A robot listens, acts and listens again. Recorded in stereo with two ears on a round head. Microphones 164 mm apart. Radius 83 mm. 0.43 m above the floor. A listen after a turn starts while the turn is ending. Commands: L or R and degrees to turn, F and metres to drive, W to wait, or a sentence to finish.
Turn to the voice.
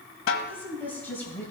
L30
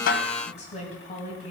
L140
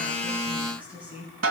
R10
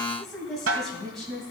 Facing the woman speaking.